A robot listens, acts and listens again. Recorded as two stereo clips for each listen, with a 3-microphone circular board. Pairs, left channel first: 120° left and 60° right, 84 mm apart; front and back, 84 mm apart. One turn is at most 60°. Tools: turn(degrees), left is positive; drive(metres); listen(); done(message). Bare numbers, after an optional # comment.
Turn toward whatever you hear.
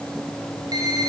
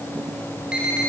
# The alarm: 100° right.
turn(-60)
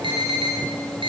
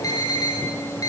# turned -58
# The alarm is now 45° right.
turn(-45)
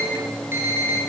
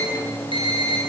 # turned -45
done("Found it: an alarm, straight ahead.")